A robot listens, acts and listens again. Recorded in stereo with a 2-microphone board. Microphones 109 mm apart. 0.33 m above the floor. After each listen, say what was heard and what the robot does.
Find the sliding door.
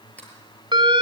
Turn 30° left.
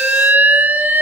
Keep listening.
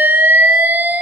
Keep listening.
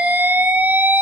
I heard a sliding door, but can't make it out now. It was about 15° right or 135° left.